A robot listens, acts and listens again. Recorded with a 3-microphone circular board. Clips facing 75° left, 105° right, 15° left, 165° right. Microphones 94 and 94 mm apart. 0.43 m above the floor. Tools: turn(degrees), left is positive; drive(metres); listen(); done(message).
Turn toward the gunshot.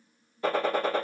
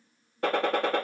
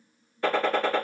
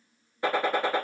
turn(degrees=-90)
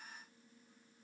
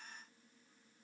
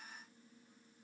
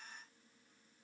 done("I heard a gunshot from this way, but can't make it out now.")